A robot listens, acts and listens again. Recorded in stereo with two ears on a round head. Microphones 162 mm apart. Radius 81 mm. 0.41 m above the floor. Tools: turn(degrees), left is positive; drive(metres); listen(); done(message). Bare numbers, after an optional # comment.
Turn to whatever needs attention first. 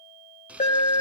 # The alarm: about 40° left or 140° left.
turn(40)
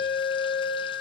# So it is at 10° left.
turn(10)
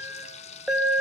done("Found it: an alarm, straight ahead, 2 to 4 m away.")